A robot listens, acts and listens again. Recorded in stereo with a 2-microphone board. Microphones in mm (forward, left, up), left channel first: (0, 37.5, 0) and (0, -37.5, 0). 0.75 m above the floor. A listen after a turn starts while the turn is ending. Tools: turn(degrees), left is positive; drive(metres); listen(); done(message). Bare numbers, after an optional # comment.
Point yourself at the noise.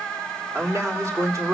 # The man speaking: about 40° right or 140° right.
turn(-40)
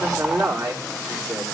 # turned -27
# So it is at 110° right.
turn(-110)
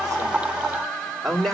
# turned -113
done("Facing the man speaking.")